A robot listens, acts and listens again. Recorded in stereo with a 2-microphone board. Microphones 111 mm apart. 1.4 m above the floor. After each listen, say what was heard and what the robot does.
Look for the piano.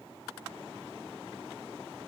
Keep listening.
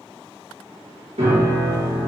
The piano: about 70° right or 110° right. Turn 70° right.
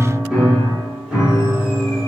Found it: a piano, straight ahead, 1 to 2 m away.